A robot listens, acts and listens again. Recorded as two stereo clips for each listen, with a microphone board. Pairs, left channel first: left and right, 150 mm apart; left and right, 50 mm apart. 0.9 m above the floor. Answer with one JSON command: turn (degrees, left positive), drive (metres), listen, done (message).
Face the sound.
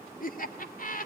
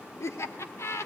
{"turn": 65}
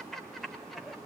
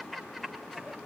{"done": "Found it: laughter, straight ahead."}